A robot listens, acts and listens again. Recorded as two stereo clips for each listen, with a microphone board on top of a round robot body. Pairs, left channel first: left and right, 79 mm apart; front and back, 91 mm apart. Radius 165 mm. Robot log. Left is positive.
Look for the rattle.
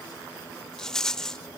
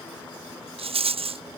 note: The rattle: 175° left.
cmd yaw +175
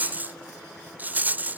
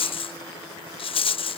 note: The rattle is now 20° right.
cmd yaw -20
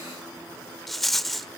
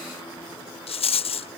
end: Found it: a rattle, straight ahead.